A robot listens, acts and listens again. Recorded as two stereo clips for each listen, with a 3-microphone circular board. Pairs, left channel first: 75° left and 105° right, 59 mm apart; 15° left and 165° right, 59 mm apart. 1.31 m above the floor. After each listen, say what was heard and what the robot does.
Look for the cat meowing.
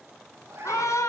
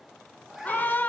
The cat meowing: 85° right. Turn 85° right.
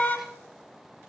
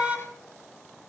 Keep listening.
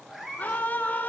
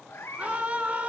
The cat meowing is now 20° right. Turn 20° right.
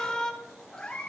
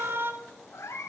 Found it: a cat meowing, straight ahead.